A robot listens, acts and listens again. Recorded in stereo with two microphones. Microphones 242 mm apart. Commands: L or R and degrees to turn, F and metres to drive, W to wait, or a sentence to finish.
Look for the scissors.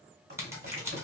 R30
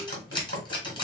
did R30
L20
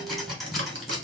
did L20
Found it: scissors, straight ahead.